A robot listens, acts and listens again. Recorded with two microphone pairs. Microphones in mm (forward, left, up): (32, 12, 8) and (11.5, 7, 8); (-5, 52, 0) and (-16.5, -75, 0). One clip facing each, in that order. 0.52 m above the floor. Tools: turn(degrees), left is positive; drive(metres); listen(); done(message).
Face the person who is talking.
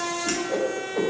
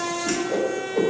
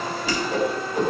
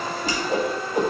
listen()
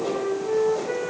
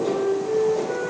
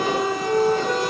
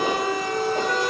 listen()
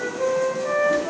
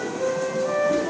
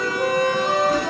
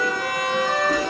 done("I can't make out anyone speaking, only a whoosh and a flute.")